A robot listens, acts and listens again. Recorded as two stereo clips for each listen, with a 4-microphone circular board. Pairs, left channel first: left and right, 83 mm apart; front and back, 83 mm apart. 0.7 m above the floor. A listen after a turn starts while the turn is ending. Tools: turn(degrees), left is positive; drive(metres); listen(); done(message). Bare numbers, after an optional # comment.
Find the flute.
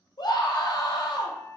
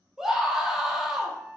# The flute: 150° right.
turn(-150)
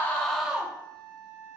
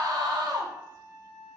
# The flute is now 55° right.
turn(-55)
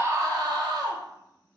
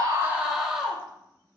listen()
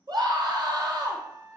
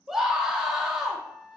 # The flute is now 15° left.
turn(15)
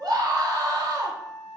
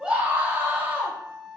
done("Found it: a flute, straight ahead, under 1 m away.")